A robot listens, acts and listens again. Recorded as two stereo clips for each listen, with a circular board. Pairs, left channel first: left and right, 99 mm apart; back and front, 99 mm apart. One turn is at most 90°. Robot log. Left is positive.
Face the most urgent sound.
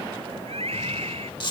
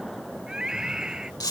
note: The scream: 85° right.
cmd yaw -85
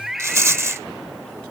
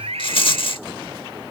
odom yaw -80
end: Facing the scream.